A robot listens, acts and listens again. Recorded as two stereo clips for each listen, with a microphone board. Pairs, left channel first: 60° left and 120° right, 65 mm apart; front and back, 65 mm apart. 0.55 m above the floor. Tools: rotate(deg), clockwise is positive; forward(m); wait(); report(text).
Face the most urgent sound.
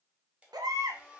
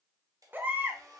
rotate(120)
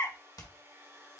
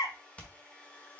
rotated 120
report("Facing the baby crying, under 1 m away.")